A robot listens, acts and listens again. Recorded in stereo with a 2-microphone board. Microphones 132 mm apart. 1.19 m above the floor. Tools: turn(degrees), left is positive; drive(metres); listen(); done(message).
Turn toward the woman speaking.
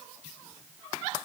listen()
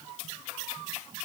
listen()
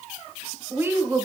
turn(degrees=-15)
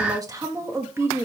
turn(degrees=-15)
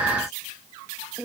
turn(degrees=-30)
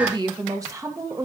turn(degrees=-25)
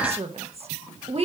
turn(degrees=-130)
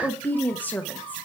turn(degrees=15)
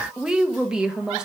done("Found it: a woman speaking, straight ahead.")